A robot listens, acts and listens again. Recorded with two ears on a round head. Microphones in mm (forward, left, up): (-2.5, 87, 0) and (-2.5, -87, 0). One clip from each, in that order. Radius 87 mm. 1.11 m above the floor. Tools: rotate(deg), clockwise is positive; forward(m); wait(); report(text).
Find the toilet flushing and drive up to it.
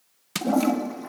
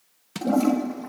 rotate(-30)
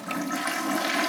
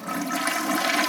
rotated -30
rotate(15)
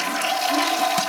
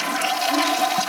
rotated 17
forward(1.0)
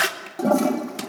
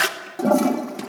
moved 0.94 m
forward(1.0)
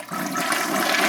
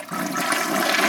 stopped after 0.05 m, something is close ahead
report("Arrived at the toilet flushing, straight ahead.")